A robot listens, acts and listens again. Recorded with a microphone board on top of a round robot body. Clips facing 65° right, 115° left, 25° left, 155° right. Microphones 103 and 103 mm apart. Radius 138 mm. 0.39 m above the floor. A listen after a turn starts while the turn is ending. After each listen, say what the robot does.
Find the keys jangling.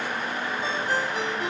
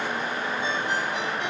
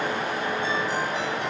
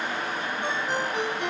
Keep listening.
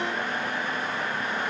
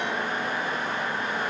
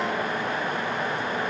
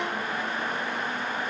Keep listening.
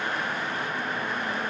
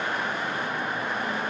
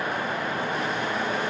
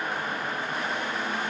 I can't make out keys jangling.